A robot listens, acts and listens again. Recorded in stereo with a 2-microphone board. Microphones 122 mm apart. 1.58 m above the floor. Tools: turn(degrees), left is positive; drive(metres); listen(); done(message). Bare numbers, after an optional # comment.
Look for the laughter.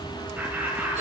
turn(-30)
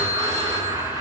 # So it is at 145° right.
turn(-145)
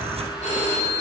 listen()
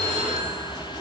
listen()
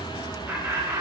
# The laughter is now 25° right.
turn(-25)
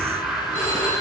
done("Found it: laughter, straight ahead, over 4 m away.")